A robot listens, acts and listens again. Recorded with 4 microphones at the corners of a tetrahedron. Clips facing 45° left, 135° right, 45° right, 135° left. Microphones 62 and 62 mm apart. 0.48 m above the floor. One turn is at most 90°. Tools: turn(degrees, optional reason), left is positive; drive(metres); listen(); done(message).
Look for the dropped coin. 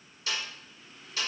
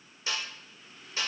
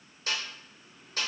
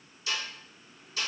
listen()
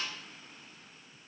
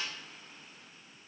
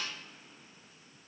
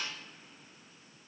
listen()
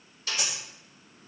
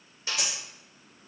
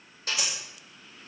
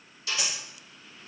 turn(degrees=-90, reason="The dropped coin: 120° right.")
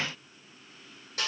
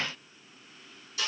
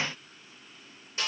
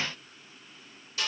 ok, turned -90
turn(degrees=-30, reason="Nothing new. It was at 30° right.")
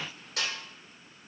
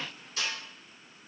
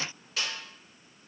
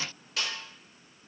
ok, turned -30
done("Facing where the dropped coin came from. I can't hear it now.")